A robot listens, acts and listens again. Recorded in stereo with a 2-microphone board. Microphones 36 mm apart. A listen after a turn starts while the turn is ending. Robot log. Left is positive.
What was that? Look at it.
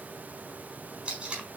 note: The tape being pulled: about 35° right or 145° right.
cmd yaw -35
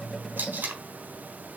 note: So it is at 115° right.
cmd yaw -115
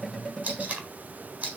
note: The tape being pulled is now 40° right.
cmd yaw -40
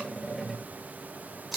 end: Facing the tape being pulled, 2 to 4 m away.